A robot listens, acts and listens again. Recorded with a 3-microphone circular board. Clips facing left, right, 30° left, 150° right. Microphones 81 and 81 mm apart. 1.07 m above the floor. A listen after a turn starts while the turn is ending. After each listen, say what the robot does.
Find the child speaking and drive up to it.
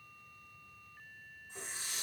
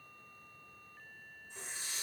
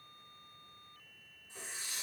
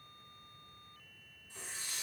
Keep listening.
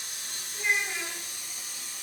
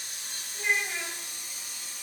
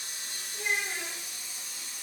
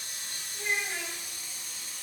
Turn 20° left.
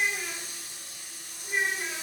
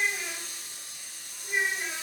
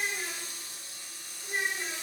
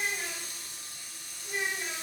Drive 1.0 m forward.
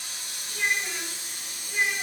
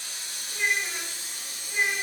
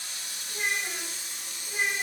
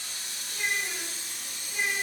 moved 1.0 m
Drive 1.0 m forward.
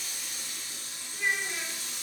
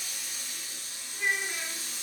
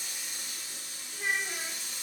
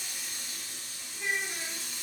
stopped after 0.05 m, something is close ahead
I am next to the child speaking.